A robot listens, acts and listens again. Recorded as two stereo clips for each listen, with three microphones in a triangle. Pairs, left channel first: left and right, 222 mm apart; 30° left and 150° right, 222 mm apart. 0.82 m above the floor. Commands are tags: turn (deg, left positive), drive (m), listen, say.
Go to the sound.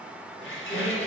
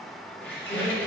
<turn deg="115"/>
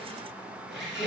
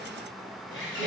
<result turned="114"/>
<drive m="1.0"/>
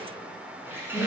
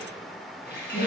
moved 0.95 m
<turn deg="-10"/>
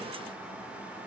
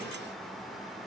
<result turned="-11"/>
<listen/>
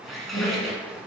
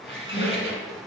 <drive m="1.0"/>
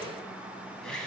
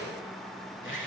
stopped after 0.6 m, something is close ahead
<say>I am next to the squeak.</say>